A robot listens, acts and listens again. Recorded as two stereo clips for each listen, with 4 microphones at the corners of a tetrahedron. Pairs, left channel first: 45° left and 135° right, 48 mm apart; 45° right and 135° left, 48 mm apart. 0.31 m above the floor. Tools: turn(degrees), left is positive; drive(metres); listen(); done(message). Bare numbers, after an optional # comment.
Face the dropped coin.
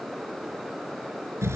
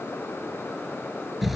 listen()
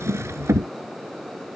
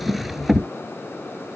listen()
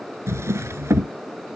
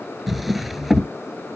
done("I can't make out a dropped coin to turn to.")